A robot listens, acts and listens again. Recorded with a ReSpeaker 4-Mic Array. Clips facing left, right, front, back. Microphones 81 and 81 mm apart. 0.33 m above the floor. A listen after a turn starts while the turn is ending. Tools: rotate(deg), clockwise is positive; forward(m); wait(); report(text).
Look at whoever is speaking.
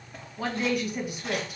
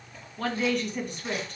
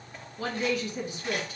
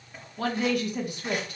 rotate(-170)
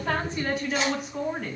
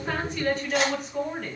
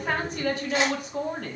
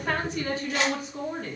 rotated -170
report("Facing the woman speaking.")